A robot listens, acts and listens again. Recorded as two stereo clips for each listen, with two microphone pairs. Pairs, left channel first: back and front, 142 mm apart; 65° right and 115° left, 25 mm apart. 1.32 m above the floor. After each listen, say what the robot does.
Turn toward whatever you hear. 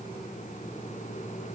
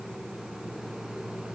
Keep listening.
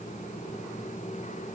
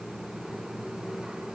Keep listening.
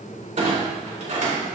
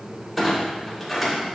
Turn 30° left.
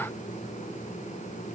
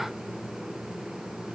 Facing where the clunk came from. I can't hear it now.